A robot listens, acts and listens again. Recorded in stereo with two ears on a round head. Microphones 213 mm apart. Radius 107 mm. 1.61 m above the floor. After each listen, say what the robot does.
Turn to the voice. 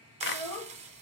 Turn 30° left.
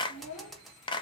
Turn 150° left.
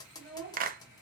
Facing the child speaking, 2 to 4 m away.